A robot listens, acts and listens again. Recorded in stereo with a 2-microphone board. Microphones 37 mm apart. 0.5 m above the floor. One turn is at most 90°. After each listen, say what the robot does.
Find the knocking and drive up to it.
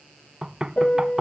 Turn 25° right.
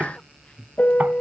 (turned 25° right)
Keep listening.
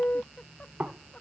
Turn 90° right.
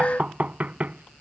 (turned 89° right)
Turn 40° right.
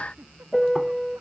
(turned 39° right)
Keep listening.
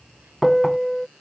Keep listening.
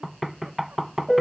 Drive 1.0 m forward.
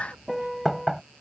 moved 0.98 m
Drive 1.0 m forward.
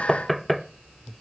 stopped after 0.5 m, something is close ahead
I am next to the knocking.